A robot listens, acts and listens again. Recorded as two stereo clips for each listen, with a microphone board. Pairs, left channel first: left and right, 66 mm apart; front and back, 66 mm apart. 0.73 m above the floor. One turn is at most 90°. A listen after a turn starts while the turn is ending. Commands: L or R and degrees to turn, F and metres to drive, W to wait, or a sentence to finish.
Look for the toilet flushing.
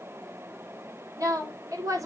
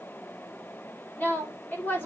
W
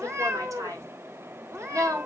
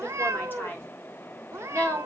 W
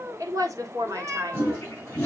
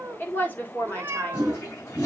L25
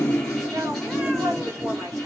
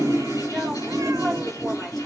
Found it: a toilet flushing, straight ahead, over 4 m away.